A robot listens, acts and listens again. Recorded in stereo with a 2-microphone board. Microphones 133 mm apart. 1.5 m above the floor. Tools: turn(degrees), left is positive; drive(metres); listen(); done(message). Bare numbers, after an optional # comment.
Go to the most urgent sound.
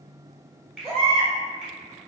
# The baby crying: about 45° left or 135° left.
turn(45)
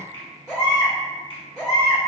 # So it is at 10° left.
turn(10)
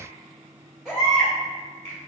drive(1.0)
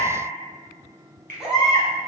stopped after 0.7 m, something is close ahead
done("Arrived at the baby crying, straight ahead.")